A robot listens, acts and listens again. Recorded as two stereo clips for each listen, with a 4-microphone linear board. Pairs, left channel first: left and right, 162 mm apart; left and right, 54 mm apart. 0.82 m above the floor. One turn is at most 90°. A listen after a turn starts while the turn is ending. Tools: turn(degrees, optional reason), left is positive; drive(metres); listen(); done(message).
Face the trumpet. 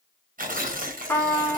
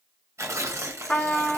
turn(degrees=30)
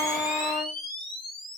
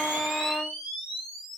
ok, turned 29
listen()
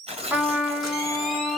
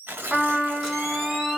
turn(degrees=-10, reason="So it is at 10° right.")
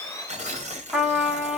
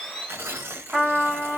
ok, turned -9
done("Facing the trumpet, 1 to 2 m away.")